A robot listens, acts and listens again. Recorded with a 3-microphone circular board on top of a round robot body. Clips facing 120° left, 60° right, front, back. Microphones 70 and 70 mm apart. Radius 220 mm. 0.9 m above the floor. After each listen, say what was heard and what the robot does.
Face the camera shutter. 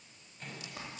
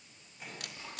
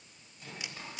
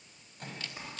The camera shutter: 75° right. Turn 75° right.
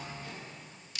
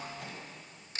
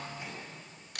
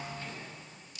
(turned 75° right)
The camera shutter is now 10° right. Turn 10° right.
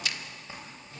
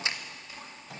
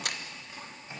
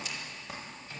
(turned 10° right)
Facing the camera shutter, 1 to 2 m away.